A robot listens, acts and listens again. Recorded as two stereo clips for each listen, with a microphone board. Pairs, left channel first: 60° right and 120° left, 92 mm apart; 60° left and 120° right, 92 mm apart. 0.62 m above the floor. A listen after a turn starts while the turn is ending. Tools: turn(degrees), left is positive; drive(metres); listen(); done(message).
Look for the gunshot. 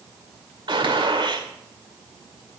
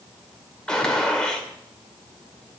turn(degrees=140)
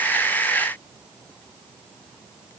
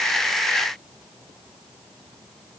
done("I heard a gunshot from this way, but can't make it out now.")